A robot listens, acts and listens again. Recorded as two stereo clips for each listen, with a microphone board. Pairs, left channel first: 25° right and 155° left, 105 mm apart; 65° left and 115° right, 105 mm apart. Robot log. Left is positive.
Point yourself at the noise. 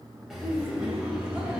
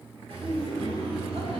note: The laughter: 120° right.
cmd yaw -120
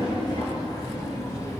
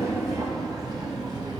note: The laughter is now 75° right.
cmd yaw -75
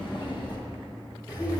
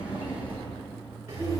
note: The laughter is now 65° right.
cmd yaw -65
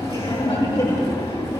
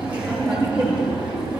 note: The laughter is now 40° right.
cmd yaw -40
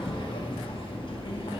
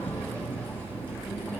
end: Facing the laughter.